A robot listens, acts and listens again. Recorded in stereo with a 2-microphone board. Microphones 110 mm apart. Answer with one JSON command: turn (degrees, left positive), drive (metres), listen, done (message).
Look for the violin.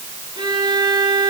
{"turn": -45}
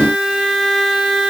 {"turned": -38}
{"done": "Facing the violin."}